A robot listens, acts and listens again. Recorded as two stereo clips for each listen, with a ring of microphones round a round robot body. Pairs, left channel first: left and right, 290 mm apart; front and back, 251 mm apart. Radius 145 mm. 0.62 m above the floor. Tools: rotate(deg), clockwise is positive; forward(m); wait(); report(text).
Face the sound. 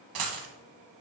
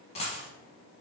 rotate(70)
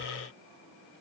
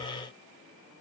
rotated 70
report("Facing where the dropped coin came from. I can't hear it now.")